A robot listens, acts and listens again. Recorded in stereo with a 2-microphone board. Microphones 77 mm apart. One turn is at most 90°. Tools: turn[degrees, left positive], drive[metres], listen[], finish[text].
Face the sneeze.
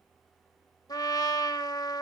Action: listen[]
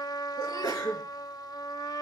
Thought: The sneeze: about 55° left or 125° left.
Action: turn[55]
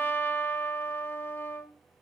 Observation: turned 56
Action: listen[]
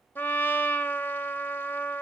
Action: finish[I heard a sneeze, but can't make it out now. It was about straight ahead or 65° left.]